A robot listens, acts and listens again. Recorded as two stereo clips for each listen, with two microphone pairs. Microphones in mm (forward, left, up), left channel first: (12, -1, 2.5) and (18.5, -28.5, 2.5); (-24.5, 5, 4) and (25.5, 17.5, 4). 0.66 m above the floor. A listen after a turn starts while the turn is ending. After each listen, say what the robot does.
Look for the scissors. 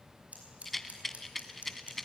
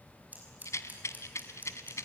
Turn 45° right.
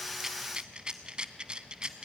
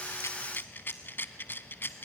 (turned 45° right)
Keep listening.
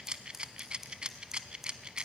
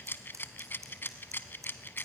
Found it: scissors, straight ahead, over 4 m away.